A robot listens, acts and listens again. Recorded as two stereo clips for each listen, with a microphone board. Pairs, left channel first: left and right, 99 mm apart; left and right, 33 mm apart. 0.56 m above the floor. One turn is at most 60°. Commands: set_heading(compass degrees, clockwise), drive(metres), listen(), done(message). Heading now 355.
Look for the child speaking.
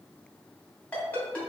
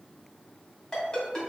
listen()
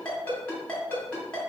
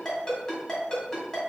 listen()
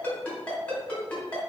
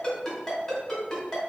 done("I can't make out a child speaking, only a ringtone.")